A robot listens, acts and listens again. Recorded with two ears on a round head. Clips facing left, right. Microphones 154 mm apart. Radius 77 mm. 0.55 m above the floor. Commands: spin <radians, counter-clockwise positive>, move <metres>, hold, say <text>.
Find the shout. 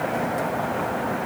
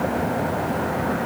hold
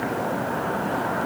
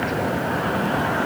hold
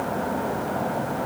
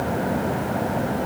say I can't make out a shout to turn to.